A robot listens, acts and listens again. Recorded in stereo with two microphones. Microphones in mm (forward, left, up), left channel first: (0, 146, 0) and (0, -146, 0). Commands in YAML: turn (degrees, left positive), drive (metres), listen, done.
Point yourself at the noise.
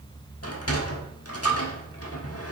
turn: 55
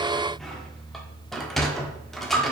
done: "Found it: a sliding door, straight ahead."